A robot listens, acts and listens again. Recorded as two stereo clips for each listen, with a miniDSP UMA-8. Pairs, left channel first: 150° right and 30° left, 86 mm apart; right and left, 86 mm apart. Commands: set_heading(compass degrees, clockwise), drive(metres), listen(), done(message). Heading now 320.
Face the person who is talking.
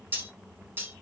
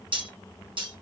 listen()
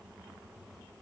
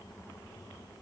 listen()
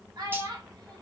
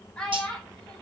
set_heading(330)
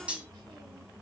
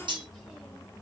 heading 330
listen()
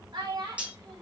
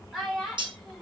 done("Found it: a child speaking, straight ahead, 1 to 2 m away.")